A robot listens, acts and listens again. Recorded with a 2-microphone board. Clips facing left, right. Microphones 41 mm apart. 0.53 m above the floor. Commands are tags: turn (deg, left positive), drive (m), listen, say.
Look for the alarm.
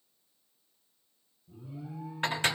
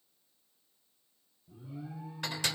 <turn deg="-65"/>
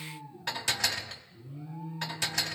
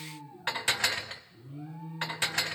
<turn deg="-50"/>
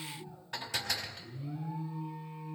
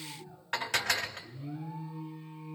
<turn deg="-10"/>
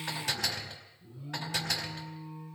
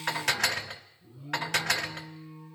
<say>Facing the alarm.</say>